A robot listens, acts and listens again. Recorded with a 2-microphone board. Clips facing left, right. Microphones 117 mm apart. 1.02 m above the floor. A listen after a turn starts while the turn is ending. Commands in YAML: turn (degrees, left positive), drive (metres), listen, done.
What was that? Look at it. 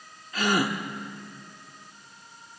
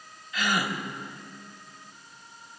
turn: 40
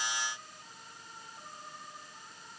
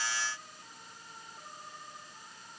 listen: true
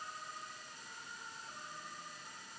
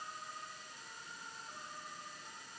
done: "I heard a gasp, but can't make it out now. It was about straight ahead or 100° left."